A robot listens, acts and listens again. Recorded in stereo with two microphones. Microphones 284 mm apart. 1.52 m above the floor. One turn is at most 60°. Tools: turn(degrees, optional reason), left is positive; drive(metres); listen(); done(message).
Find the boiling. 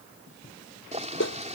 turn(degrees=-25, reason="The boiling: about 25° right or 155° right.")
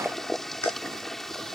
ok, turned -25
done("Found it: boiling, straight ahead.")